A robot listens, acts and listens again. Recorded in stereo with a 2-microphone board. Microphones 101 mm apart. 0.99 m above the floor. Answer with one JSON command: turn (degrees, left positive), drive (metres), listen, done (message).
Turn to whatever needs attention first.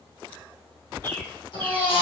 {"turn": 70}
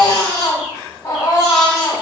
{"turn": 35}
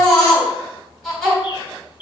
{"done": "Found it: a baby crying, straight ahead, 2 to 4 m away."}